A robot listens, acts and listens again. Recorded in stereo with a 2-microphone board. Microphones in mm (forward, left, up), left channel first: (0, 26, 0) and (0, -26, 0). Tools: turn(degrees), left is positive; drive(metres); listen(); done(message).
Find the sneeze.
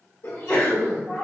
turn(degrees=45)
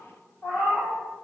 listen()
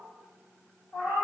done("I heard a sneeze, but can't make it out now. It was about straight ahead or 90° left.")